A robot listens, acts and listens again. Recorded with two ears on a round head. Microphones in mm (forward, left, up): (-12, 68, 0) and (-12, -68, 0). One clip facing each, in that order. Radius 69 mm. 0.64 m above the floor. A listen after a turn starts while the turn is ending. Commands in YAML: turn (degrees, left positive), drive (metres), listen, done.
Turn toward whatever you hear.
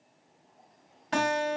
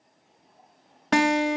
turn: -70
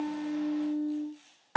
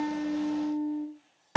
turn: -25
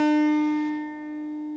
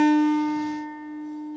turn: 20
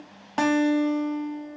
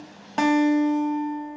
done: "Found it: a guitar, straight ahead, under 1 m away."